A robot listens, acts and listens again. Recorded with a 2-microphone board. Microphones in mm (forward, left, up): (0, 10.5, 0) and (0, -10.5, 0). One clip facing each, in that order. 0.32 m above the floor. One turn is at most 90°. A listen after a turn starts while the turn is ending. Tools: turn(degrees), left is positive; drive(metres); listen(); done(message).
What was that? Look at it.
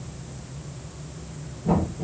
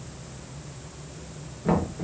turn(degrees=-90)
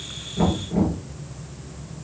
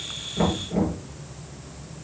done("Facing the knocking, over 4 m away.")